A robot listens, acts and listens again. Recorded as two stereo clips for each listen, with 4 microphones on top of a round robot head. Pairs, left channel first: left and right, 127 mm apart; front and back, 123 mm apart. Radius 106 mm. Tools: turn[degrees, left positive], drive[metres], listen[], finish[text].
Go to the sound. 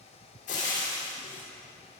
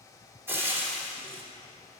Thought: The frying: 110° left.
Action: turn[110]
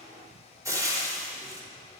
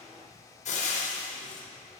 Thought: The frying is now 25° right.
Action: turn[-25]
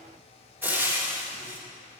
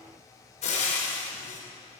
Thought: The frying is now 15° right.
Action: turn[-15]
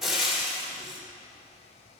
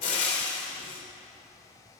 Action: drive[1.0]
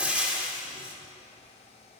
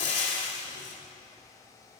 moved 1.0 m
Thought: The frying is now 10° right.
Action: turn[-10]
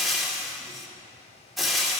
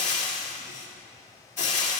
Action: drive[1.0]
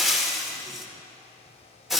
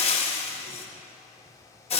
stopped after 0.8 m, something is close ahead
Action: finish[Arrived at the frying, straight ahead.]